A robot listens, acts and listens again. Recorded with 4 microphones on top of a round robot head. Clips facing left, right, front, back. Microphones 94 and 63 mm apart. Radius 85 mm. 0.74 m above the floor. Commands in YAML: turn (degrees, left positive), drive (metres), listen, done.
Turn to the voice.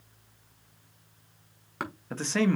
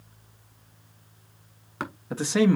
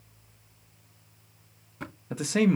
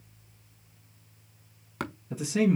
turn: -10
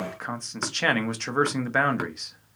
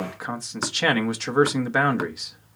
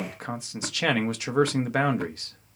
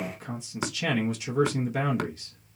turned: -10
done: "Facing the man speaking."